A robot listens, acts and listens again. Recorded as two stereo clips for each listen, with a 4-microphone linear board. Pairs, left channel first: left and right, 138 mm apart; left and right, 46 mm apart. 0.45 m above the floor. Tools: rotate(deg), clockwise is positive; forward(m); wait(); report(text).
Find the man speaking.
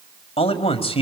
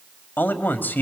rotate(-45)
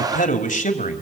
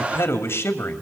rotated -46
rotate(-85)
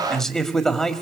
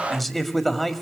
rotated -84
report("Found it: a man speaking, straight ahead.")